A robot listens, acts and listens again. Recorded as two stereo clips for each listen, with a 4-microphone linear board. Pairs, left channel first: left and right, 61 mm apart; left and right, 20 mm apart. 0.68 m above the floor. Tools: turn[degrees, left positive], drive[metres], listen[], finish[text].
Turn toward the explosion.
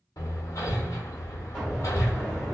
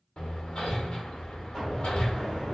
Action: turn[30]
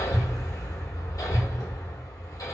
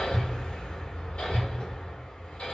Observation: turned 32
Action: listen[]
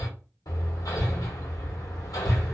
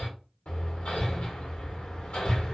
Action: finish[I heard an explosion, but can't make it out now. It was about 30° right or 145° left.]